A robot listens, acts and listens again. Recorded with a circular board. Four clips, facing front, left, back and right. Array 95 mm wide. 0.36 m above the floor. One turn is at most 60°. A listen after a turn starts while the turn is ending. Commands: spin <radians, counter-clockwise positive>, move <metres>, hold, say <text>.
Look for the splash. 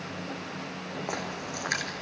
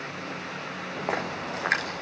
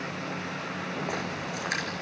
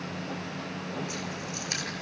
spin 1.05
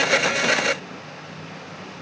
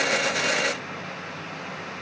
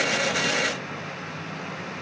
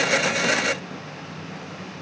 spin 0.44
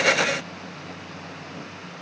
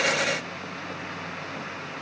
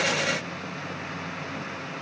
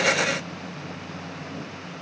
say Facing where the splash came from. I can't hear it now.